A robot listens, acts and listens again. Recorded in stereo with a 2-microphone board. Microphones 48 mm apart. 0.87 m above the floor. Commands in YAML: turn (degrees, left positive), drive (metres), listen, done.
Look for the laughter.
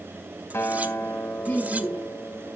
turn: 35
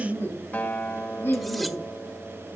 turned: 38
turn: 110
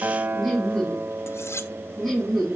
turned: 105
done: "Found it: laughter, straight ahead."